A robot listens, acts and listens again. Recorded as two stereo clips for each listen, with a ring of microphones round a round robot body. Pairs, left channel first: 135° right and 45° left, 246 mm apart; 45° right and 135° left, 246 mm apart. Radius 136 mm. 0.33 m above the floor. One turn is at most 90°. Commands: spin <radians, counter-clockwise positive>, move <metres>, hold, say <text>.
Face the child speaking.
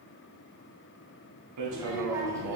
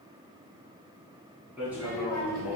spin 1.57
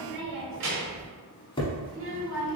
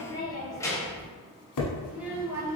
spin 1.05
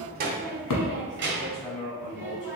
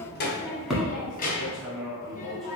say Found it: a child speaking, straight ahead.